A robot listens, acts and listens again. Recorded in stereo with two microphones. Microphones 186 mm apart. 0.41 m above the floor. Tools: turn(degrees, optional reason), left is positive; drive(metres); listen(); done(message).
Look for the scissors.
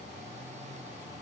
listen()
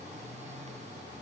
listen()
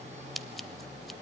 turn(degrees=30)
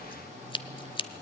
turn(degrees=150, reason="So it is at 150° left.")
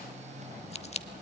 turn(degrees=40, reason="The scissors is now 40° left.")
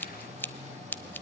turn(degrees=10, reason="The scissors is now 10° left.")
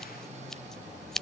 done("Facing the scissors, under 1 m away.")